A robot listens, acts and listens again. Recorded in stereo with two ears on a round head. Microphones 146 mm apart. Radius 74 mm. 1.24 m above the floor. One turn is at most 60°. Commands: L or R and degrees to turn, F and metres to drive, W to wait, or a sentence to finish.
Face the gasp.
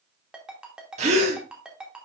R40
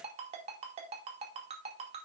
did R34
W
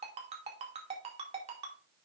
I heard a gasp, but can't make it out now. It was about 5° right or 105° right.